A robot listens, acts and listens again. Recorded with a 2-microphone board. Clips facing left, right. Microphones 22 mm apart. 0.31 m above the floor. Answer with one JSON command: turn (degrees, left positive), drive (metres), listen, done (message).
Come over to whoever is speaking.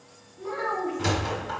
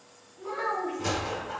{"turn": 30}
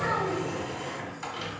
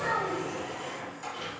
{"turn": 145}
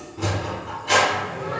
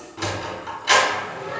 {"listen": true}
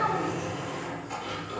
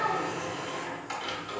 {"turn": 30}
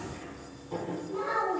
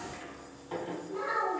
{"drive": 1.0}
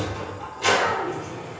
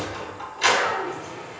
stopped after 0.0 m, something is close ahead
{"done": "Blocked. The child speaking is further on, straight ahead."}